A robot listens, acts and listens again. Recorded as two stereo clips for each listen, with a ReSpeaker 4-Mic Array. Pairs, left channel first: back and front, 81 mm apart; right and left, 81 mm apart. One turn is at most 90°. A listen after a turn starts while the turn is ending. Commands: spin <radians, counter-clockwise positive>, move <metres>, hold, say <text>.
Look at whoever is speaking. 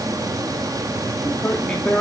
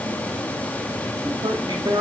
spin 1.57
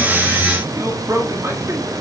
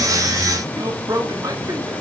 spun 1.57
spin 0.87
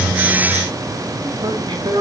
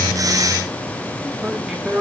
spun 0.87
spin 0.26
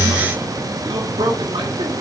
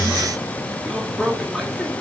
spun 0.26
say Found it: a man speaking, straight ahead, 2 to 4 m away.